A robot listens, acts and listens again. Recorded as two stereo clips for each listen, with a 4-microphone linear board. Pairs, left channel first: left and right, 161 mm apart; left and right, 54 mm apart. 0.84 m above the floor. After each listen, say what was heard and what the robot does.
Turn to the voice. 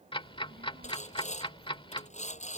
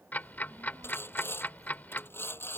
Turn 90° right.
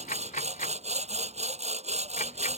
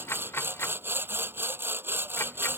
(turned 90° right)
Keep listening.
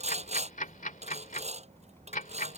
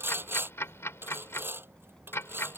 The child speaking is now 15° left. Turn 15° left.
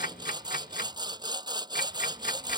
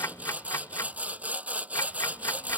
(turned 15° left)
Keep listening.
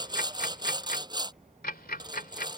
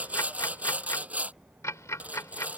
Found it: a child speaking, straight ahead.